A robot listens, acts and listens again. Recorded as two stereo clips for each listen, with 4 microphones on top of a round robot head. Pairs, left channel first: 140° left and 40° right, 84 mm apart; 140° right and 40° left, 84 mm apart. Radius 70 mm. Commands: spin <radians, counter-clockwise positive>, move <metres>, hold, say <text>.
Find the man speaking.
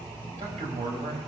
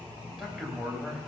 spin -0.70
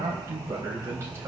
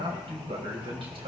spin 0.35
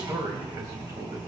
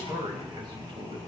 spin 0.26
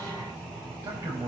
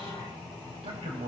spin 0.26
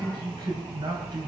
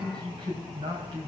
say Found it: a man speaking, straight ahead, over 4 m away.